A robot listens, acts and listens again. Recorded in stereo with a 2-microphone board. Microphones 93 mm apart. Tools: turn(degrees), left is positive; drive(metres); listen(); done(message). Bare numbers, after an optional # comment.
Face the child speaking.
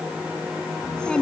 turn(30)
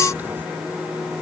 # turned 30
listen()
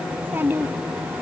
# So it is at 20° right.
turn(-20)
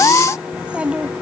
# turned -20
# The child speaking is now 10° right.
turn(-10)
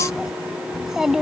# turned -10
done("Facing the child speaking.")